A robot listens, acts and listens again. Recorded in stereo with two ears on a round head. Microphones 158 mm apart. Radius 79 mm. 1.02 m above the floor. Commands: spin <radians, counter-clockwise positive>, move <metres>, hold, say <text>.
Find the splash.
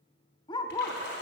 spin 1.13
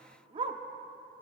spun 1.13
hold
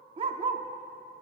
say I heard a splash, but can't make it out now. It was about straight ahead or 50° left.